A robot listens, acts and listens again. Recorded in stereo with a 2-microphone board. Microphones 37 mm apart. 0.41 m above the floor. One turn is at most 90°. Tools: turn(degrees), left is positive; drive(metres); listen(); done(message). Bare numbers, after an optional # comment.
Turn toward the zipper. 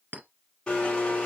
listen()
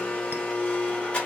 listen()
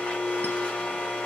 done("I can't make out a zipper to turn to.")